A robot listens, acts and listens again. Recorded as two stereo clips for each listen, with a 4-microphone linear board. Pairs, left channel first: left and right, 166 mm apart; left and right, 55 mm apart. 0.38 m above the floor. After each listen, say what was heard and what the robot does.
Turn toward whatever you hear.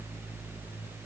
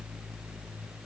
Keep listening.
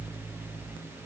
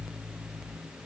Keep listening.
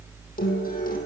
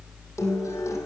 The guitar: about 55° left or 125° left. Turn 55° left.
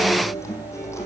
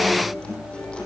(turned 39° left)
So it is at 15° left. Turn 15° left.
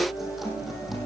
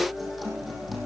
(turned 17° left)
Keep listening.
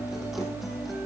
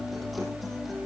Keep listening.
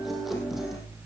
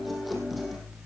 Facing the guitar, over 4 m away.